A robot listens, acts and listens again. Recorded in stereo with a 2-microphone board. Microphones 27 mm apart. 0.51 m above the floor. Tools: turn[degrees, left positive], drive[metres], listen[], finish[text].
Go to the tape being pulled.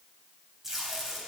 Action: turn[-30]
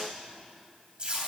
Thought: So it is at 140° right.
Action: turn[-140]
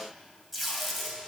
Action: drive[1.0]
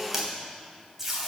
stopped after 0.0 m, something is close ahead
Thought: The tape being pulled is now 15° right.
Action: turn[-15]
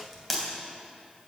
Action: finish[Something is in my way. I am facing the tape being pulled but have not reached it.]